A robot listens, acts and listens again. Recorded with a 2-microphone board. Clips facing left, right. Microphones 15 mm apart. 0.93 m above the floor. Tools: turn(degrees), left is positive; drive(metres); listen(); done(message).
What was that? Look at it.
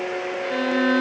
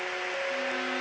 turn(degrees=75)
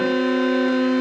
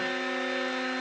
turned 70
turn(degrees=35)
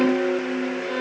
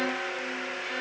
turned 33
done("Facing the violin, 2 to 4 m away.")